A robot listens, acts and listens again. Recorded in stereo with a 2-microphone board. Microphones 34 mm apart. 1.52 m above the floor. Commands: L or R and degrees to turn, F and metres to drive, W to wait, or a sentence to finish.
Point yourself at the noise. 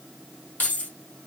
L50
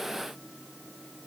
W
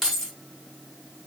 Found it: keys jangling, straight ahead, 1 to 2 m away.